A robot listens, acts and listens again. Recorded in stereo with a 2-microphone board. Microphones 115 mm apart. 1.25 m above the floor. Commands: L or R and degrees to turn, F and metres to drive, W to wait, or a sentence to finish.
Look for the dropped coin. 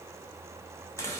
W
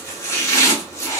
W
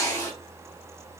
I can't make out a dropped coin, only chopping.